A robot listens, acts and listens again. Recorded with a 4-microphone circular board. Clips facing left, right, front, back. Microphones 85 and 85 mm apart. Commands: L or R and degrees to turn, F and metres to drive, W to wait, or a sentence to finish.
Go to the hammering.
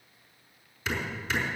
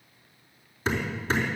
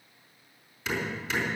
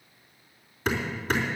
R140
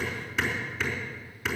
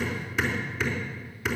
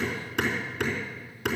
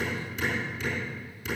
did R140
F1.0
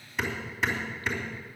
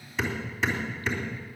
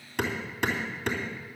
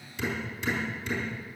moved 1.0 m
F1.0
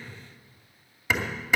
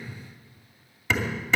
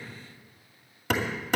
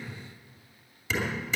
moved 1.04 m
F1.0
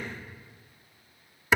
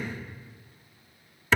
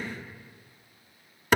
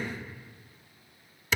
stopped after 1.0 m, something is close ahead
L20
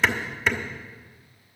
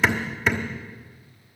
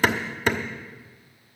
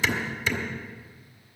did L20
I am next to the hammering.